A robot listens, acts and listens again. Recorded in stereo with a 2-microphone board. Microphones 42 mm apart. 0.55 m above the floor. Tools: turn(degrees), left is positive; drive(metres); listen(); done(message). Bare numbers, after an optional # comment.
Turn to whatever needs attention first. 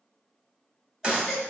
turn(-30)
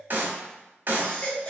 # So it is at 25° left.
turn(25)
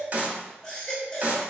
# The baby crying is now 15° left.
turn(15)
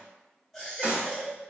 done("Found it: a baby crying, straight ahead.")